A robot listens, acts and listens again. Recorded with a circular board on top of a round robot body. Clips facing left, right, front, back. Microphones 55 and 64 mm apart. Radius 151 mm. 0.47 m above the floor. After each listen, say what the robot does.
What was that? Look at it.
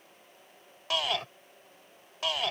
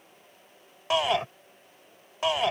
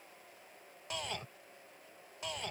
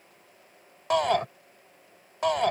Turn 160° right.
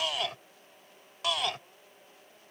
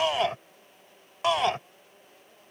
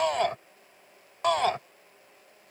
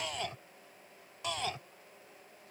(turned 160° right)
Turn 30° right.
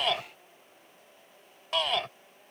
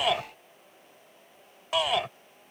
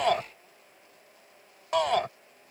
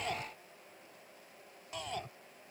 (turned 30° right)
Turn 10° right.
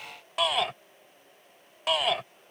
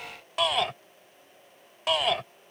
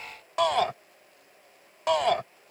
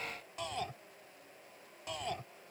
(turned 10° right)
Facing the shout.